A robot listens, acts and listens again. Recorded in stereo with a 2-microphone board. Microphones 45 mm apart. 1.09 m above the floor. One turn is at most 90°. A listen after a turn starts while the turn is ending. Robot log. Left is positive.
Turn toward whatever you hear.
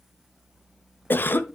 note: The cough: about 50° left or 130° left.
cmd yaw +50
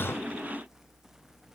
cmd idle
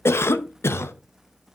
note: So it is at 80° left.
cmd yaw +80
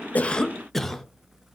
end: Facing the cough.